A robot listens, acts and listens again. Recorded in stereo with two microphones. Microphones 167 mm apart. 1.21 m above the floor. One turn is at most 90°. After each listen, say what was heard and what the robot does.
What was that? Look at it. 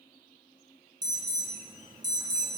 The alarm: about 25° right or 155° right. Turn 25° right.
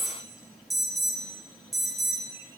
Found it: an alarm, straight ahead, under 1 m away.